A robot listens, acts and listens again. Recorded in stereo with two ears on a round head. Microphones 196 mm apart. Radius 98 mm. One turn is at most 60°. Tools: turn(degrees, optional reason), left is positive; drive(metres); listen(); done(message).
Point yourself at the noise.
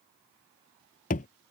turn(degrees=40, reason="The thud: about 40° left or 140° left.")
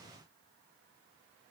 listen()
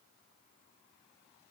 done("I heard a thud, but can't make it out now. It was about straight ahead or 100° left.")